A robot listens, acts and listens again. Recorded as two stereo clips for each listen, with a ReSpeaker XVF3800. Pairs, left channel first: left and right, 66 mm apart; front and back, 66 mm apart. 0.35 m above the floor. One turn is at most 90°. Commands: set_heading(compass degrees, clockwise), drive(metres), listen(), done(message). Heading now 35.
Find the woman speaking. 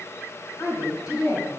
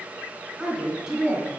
set_heading(305)
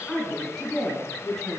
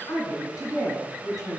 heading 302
set_heading(287)
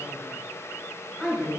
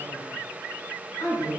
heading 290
done("Found it: a woman speaking, straight ahead.")